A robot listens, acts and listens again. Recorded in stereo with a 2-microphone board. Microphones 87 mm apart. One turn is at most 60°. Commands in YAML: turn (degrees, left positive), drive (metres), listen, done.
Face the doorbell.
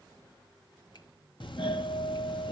turn: 60
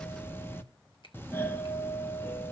turn: 30
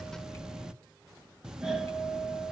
done: "Facing the doorbell."